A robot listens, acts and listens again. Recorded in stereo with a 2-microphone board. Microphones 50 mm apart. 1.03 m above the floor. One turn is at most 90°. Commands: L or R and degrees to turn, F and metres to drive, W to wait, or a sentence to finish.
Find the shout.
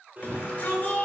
L30
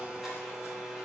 W
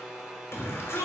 L90
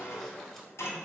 L35
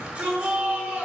R20
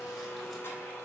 W
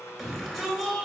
Facing the shout, 2 to 4 m away.